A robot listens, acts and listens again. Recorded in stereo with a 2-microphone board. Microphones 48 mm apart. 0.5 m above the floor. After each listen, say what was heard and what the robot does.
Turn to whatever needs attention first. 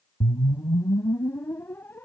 Keep listening.
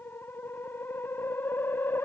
Keep listening.
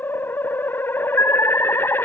The alarm: about 70° left or 110° left. Turn 70° left.
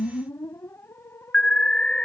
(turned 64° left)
So it is at 20° left. Turn 20° left.
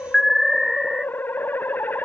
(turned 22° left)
Facing the alarm.